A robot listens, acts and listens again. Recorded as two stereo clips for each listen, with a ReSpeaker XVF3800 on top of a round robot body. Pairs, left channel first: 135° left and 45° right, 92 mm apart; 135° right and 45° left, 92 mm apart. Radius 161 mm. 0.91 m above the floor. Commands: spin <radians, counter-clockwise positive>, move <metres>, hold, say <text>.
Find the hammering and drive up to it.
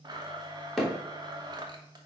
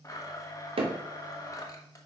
spin 0.79
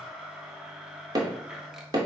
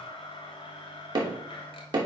move 1.0
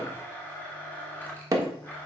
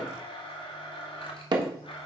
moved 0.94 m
move 1.0
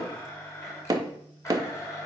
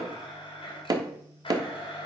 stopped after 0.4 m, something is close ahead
say I am next to the hammering.